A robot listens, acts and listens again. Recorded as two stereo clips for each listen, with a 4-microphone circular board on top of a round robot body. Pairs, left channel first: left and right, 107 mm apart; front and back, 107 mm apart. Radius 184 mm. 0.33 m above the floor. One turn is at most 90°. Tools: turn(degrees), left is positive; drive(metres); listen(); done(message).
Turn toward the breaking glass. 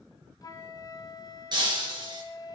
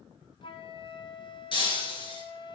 turn(degrees=-40)
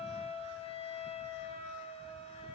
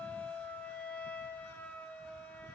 done("I heard breaking glass from this way, but can't make it out now.")